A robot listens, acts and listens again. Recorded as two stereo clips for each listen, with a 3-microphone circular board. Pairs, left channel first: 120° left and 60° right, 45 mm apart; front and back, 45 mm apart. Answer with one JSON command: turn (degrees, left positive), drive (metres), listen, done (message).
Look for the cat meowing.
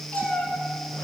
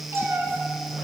{"turn": 175}
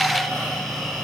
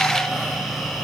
{"listen": true}
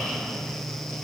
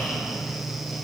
{"listen": true}
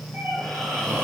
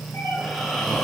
{"turn": -20}
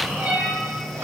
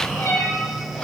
{"done": "Facing the cat meowing, 2 to 4 m away."}